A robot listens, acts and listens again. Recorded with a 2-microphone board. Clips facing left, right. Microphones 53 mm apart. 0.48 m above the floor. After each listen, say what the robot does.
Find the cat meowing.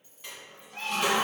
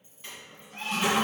Turn 55° left.
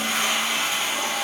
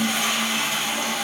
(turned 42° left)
Keep listening.
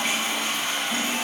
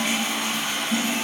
Keep listening.
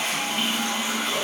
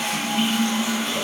I heard a cat meowing, but can't make it out now. It was about 15° left or 85° left.